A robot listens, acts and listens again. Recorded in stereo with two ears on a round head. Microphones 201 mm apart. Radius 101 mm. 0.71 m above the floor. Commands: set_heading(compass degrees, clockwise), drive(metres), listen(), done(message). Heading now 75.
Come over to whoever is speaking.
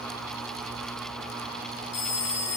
listen()
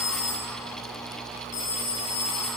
listen()
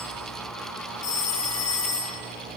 done("I can't make out anyone speaking, only a phone ringing.")